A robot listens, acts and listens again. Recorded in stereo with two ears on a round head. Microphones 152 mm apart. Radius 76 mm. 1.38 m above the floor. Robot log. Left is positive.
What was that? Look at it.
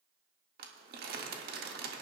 note: The crumpling: about 60° right or 120° right.
cmd yaw -60
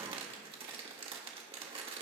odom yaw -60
note: So it is at 35° right.
cmd yaw -35
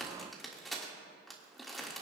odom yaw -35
end: Facing the crumpling.